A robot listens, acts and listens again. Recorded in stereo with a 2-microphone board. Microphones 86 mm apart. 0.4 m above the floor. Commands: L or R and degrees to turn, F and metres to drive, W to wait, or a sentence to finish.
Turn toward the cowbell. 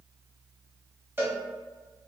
R25
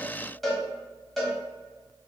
Facing the cowbell.